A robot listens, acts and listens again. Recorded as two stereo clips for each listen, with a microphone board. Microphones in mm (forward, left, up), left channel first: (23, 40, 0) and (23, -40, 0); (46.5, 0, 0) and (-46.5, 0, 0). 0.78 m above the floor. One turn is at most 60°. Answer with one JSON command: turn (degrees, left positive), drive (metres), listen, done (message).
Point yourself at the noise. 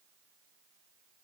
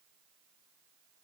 {"listen": true}
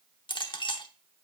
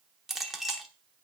{"turn": 60}
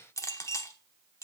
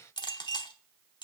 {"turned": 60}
{"turn": 40}
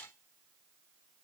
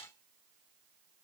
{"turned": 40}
{"listen": true}
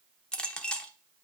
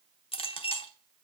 {"turn": 10}
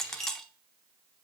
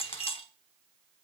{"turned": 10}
{"done": "Found it: a clink, straight ahead, under 1 m away."}